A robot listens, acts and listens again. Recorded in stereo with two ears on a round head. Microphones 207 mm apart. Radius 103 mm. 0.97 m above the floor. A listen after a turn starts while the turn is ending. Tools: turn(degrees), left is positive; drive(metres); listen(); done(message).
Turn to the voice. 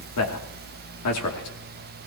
turn(degrees=75)
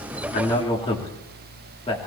turn(degrees=25)
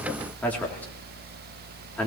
turn(degrees=10)
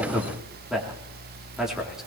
done("Facing the man speaking, 2 to 4 m away.")